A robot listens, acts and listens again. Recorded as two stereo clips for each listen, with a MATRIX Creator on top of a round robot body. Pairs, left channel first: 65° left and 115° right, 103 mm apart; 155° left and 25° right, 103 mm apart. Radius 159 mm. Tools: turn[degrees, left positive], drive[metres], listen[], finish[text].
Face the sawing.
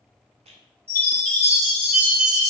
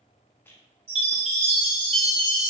Action: listen[]
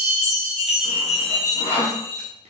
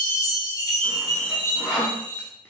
Thought: The sawing: 65° left.
Action: turn[65]
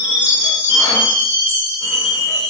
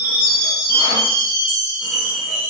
Action: listen[]
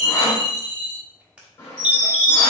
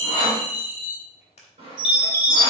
Action: finish[Facing the sawing, 1 to 2 m away.]